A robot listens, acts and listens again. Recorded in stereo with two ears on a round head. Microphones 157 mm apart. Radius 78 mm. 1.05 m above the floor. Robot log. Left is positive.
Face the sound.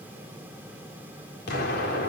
note: The explosion: about 60° left or 120° left.
cmd yaw +60
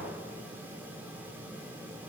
cmd idle
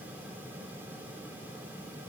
end: I heard an explosion, but can't make it out now. It was about straight ahead or 60° left.